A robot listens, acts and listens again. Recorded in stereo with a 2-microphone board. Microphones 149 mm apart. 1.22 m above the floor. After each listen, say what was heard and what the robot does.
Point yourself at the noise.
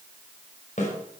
The snare drum: about 55° left or 125° left. Turn 55° left.
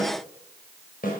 So it is at 70° left. Turn 70° left.
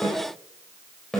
Found it: a snare drum, straight ahead.